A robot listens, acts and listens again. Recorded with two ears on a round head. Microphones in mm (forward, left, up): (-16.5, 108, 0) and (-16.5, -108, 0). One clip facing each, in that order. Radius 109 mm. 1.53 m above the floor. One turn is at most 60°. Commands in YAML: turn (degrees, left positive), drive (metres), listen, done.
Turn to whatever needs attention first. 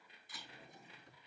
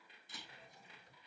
listen: true
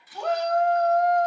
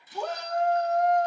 turn: -60
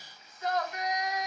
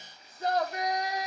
turn: -30
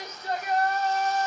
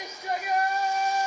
turn: -10
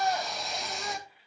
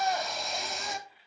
done: "Found it: a shout, straight ahead."